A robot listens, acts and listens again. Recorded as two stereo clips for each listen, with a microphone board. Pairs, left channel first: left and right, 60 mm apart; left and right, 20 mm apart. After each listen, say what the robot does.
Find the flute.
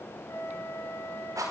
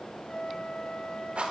Turn 90° left.
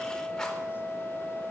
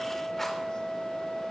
Found it: a flute, straight ahead.